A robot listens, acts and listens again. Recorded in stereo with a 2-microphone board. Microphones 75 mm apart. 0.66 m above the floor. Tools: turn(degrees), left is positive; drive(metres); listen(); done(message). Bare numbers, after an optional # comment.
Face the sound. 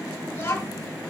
# The child speaking: about 25° left or 155° left.
turn(25)
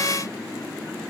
listen()
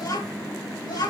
# So it is at 120° left.
turn(120)
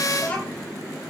# The child speaking is now 20° left.
turn(20)
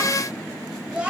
# The child speaking is now 15° right.
turn(-15)
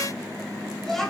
done("Facing the child speaking, 2 to 4 m away.")